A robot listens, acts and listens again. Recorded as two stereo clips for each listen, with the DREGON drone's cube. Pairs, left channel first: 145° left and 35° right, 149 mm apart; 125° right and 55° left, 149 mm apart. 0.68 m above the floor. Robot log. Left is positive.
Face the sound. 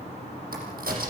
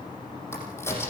note: The crack: 50° right.
cmd yaw -50
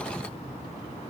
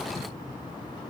end: Facing where the crack came from. I can't hear it now.